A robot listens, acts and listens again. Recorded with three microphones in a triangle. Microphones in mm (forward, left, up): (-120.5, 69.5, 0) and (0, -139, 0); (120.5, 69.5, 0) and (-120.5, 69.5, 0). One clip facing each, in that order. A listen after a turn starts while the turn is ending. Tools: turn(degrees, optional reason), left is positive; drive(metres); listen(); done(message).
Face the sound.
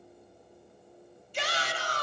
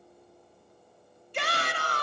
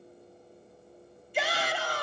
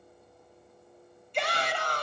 turn(degrees=-85, reason="The shout: 85° right.")
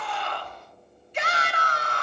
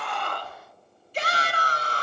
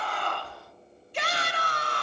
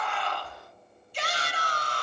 turn(degrees=-10, reason="The shout is now 10° right.")
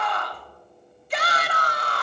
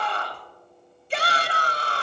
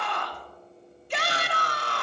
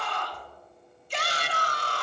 done("Found it: a shout, straight ahead, under 1 m away.")